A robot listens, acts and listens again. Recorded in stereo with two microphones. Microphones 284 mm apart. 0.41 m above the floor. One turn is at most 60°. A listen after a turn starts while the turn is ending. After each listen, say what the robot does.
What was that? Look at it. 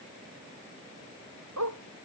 Turn 60° right.
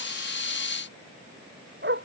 Turn 40° right.
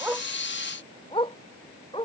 Turn 20° left.
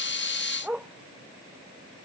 Found it: a dog barking, straight ahead.